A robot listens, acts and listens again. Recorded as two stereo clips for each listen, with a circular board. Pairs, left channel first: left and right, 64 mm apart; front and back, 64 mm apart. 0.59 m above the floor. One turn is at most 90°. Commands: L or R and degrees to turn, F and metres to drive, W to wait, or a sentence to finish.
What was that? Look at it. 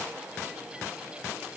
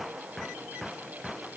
W
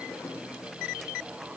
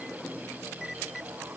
W
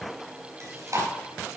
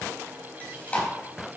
R65
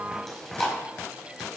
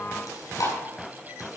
Facing the chewing.